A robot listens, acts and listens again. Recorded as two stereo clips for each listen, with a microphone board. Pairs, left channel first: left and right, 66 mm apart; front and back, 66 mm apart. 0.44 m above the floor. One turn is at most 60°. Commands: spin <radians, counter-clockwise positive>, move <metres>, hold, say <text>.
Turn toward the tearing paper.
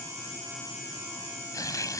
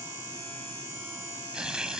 spin 1.05
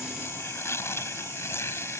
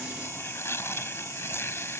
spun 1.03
spin 0.79
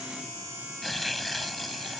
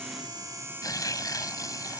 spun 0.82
say Found it: tearing paper, straight ahead.